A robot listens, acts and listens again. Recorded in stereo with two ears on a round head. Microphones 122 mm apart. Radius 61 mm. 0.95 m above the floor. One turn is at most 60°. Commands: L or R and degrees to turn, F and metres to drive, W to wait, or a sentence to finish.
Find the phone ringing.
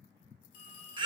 L60
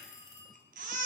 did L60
L45
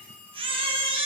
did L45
L10
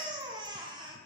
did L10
W
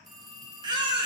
Found it: a phone ringing, straight ahead.